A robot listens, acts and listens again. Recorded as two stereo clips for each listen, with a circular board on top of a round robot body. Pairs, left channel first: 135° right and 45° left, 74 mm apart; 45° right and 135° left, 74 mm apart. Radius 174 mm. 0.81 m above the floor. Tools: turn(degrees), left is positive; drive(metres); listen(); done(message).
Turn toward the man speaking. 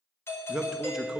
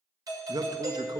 turn(degrees=130)
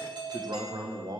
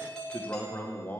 turn(degrees=25)
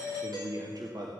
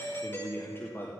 turn(degrees=15)
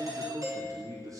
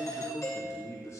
done("Facing the man speaking, 2 to 4 m away.")